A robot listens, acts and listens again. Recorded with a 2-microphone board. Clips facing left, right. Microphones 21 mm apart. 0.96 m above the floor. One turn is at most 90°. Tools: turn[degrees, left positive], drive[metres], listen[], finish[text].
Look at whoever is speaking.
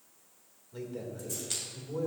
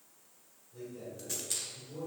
Action: turn[90]
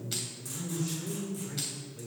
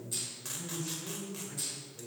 Thought: So it is at 10° left.
Action: turn[10]
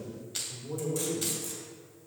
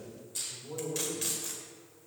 Action: finish[Found it: a man speaking, straight ahead, 2 to 4 m away.]